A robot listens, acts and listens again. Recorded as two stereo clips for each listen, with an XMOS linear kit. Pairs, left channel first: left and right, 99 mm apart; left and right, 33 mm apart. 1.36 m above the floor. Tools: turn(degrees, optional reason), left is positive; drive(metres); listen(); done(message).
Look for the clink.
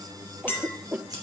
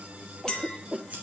turn(degrees=20, reason="The clink: about 20° left or 160° left.")
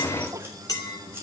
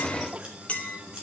turn(degrees=140, reason="So it is at 140° left.")
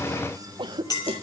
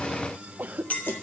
turn(degrees=40, reason="The clink is now 40° left.")
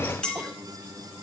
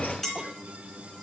turn(degrees=10, reason="The clink is now 10° left.")
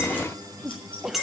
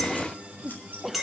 done("Facing the clink, 2 to 4 m away.")